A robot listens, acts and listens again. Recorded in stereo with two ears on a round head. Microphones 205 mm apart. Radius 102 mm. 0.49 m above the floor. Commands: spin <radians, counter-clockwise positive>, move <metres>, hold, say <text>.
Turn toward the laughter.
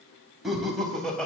spin 0.52
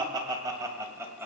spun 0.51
spin -0.17
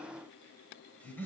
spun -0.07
spin 0.17
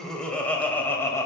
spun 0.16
spin 0.26
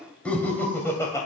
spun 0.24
spin 0.26
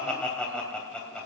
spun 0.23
say Facing the laughter, 2 to 4 m away.